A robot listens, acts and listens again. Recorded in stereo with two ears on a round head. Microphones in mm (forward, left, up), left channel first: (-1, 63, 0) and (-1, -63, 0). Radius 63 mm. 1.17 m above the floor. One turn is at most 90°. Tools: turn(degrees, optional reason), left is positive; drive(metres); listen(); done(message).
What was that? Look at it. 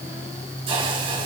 turn(degrees=-40, reason="The hiss: about 40° right or 140° right.")
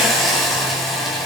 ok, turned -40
done("Found it: a hiss, straight ahead.")